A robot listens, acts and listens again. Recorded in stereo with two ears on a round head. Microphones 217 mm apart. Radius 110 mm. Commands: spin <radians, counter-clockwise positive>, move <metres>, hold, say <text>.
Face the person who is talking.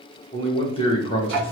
spin 0.44
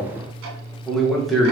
say Found it: a man speaking, straight ahead.